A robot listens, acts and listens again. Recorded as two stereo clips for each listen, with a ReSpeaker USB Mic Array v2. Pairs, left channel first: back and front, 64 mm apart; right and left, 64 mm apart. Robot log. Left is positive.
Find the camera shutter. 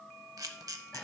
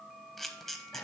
end: Found it: a camera shutter, straight ahead, under 1 m away.